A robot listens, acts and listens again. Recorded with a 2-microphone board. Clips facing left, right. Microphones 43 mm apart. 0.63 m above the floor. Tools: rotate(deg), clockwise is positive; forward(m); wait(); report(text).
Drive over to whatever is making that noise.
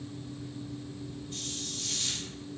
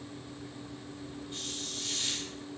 rotate(15)
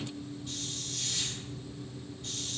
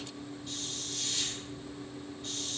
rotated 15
forward(1.0)
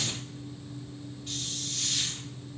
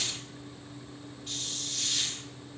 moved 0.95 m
forward(1.0)
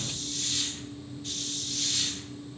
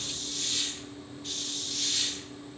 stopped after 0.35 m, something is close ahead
report("I am next to the hiss.")